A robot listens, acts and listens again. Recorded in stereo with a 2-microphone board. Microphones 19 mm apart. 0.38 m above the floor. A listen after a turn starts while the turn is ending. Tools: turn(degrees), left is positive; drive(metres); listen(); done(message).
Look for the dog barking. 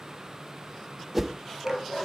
turn(degrees=55)
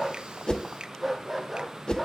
done("Facing the dog barking, 2 to 4 m away.")